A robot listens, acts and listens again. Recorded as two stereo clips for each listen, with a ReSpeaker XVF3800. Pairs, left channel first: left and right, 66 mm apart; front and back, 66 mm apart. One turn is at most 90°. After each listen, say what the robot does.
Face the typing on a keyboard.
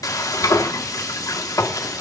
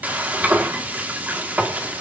Keep listening.
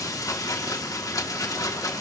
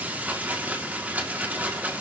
Keep listening.
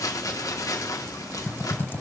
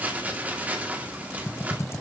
Turn 40° left.
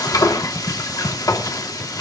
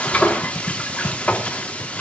Turn 10° right.
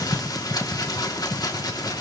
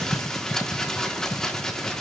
Found it: typing on a keyboard, straight ahead.